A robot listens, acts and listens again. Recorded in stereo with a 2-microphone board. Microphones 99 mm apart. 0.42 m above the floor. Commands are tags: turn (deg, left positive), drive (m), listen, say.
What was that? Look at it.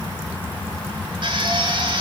<turn deg="-55"/>
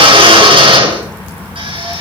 <turn deg="-70"/>
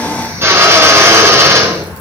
<turn deg="-25"/>
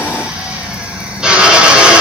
<say>Found it: a drill, straight ahead, over 4 m away.</say>